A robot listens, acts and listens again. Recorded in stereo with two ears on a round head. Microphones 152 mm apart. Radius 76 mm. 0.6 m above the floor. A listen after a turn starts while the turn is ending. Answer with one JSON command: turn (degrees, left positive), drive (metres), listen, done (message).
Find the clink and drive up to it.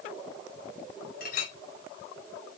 {"turn": 50}
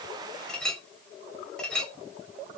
{"drive": 1.0}
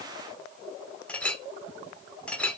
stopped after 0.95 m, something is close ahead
{"turn": 10}
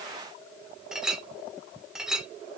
{"done": "Arrived at the clink, straight ahead."}